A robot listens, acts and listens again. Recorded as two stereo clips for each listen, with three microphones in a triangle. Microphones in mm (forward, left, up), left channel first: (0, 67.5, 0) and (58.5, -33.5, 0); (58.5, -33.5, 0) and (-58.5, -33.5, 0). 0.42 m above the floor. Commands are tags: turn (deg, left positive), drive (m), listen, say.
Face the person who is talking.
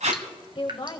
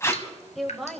<turn deg="90"/>
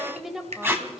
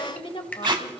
<turn deg="25"/>
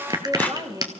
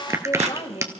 <turn deg="-10"/>
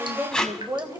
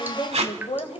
<say>Facing the woman speaking, 1 to 2 m away.</say>